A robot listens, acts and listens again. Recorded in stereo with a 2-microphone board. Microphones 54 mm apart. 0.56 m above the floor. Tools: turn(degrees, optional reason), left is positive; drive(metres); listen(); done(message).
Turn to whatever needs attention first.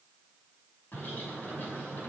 listen()
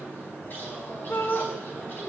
turn(degrees=60, reason="The shout: about 60° left or 120° left.")
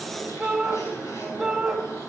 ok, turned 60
done("Found it: a shout, straight ahead.")